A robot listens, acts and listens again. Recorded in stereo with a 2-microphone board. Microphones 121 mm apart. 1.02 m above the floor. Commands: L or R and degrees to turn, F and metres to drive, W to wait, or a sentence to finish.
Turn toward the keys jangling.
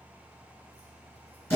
W
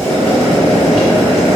W
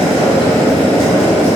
I can't make out keys jangling, only boiling.